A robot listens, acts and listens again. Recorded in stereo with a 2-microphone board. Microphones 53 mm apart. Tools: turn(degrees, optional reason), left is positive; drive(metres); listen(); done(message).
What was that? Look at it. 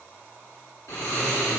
turn(degrees=90)
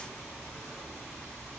turn(degrees=10, reason="So it is at 10° left.")
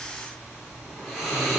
done("Facing the snoring, 2 to 4 m away.")